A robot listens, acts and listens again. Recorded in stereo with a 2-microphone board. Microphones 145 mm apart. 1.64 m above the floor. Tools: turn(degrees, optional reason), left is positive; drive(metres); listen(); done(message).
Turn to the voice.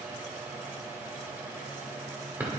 listen()
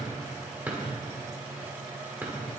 listen()
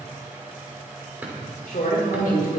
turn(degrees=90)
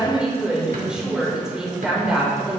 done("Found it: a woman speaking, straight ahead, over 4 m away.")